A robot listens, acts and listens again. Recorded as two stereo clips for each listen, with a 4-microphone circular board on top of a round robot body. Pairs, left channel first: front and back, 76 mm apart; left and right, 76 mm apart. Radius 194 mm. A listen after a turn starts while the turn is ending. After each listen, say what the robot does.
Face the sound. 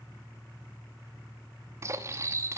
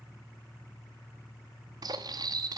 Turn 125° right.
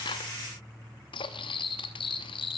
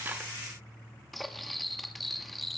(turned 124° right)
Facing the cutlery clinking.